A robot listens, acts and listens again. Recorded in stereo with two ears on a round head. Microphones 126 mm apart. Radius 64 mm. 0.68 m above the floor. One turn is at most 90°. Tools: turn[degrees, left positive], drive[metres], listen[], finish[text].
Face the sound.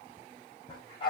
Thought: The dog barking: about 35° left or 145° left.
Action: turn[35]
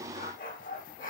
Thought: So it is at 110° left.
Action: turn[90]
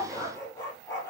Thought: The dog barking is now 25° left.
Action: turn[25]
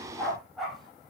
Action: finish[Facing the dog barking.]